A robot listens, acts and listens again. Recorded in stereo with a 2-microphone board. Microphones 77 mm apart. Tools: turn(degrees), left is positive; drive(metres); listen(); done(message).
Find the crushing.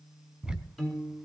listen()
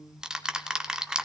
listen()
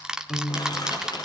turn(degrees=65)
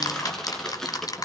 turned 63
done("Found it: crushing, straight ahead, over 4 m away.")